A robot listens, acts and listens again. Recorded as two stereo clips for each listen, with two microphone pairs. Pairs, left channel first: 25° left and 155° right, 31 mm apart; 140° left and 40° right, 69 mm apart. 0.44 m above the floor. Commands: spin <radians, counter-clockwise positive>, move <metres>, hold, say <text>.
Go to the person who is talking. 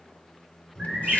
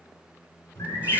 spin 1.83
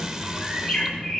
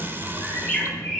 move 1.0
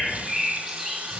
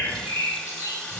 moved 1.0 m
move 1.0
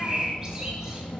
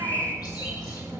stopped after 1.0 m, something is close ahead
say I am next to the child speaking.